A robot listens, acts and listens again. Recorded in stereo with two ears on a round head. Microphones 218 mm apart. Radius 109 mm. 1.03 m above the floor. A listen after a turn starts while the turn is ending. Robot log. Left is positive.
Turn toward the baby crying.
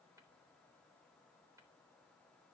cmd idle
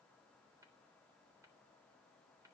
cmd idle
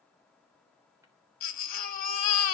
note: The baby crying: about 40° left or 140° left.
cmd yaw +40
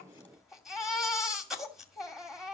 end: Facing the baby crying, 2 to 4 m away.